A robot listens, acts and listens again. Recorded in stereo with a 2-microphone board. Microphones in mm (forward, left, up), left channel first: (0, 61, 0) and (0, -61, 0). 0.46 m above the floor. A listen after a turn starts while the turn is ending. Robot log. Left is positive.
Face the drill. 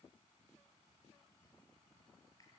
cmd idle
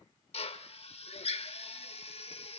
note: The drill: about 55° left or 125° left.
cmd yaw +55
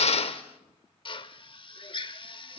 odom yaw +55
note: So it is at 55° left.
cmd yaw +55
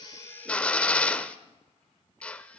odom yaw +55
note: The drill is now 10° left.
cmd yaw +10
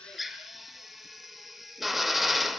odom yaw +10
end: Found it: a drill, straight ahead, under 1 m away.